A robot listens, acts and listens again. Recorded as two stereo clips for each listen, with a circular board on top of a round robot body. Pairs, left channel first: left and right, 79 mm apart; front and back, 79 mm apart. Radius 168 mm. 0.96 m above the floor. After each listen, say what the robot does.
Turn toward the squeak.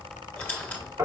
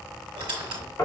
Turn 160° left.
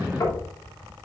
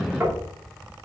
Keep listening.
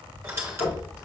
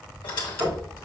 Turn 30° right.
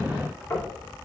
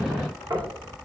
Keep listening.
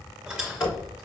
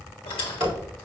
Turn 10° right.
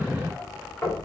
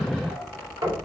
Keep listening.
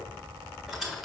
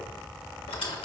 Facing the squeak, 1 to 2 m away.